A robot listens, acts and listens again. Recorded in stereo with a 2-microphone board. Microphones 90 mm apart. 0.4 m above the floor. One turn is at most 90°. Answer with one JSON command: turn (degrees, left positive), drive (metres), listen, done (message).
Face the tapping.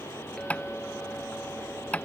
{"turn": 30}
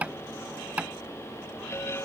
{"turn": -15}
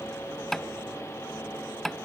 {"done": "Facing the tapping."}